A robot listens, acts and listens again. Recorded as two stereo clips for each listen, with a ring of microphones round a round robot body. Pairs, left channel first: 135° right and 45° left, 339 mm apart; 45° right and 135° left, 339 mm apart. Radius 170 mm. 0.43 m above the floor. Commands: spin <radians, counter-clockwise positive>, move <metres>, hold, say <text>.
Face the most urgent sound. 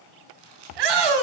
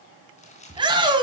spin 1.05
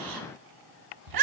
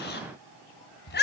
spin 0.26
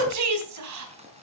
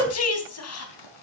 say Facing the shout.